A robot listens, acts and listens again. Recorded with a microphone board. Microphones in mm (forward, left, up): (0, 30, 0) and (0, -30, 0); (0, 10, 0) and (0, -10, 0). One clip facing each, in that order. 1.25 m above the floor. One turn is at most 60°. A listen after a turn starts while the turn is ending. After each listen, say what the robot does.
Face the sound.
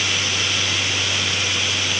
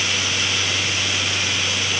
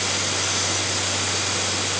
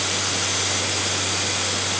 Keep listening.
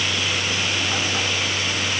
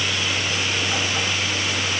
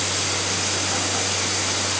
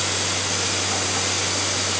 Keep listening.
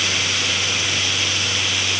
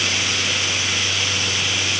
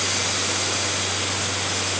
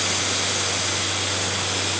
I can't make out anything.